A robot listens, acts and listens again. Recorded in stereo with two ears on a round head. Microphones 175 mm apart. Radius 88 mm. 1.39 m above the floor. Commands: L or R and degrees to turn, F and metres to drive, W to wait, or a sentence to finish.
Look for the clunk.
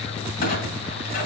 L45
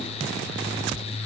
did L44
W
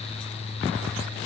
I heard a clunk, but can't make it out now. It was about straight ahead or 95° left.